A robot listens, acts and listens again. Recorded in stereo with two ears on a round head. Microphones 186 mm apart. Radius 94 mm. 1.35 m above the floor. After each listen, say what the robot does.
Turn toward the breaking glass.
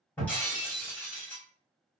Turn 30° left.
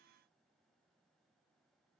Keep listening.
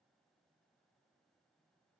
I heard breaking glass, but can't make it out now. It was about 20° right or 140° left.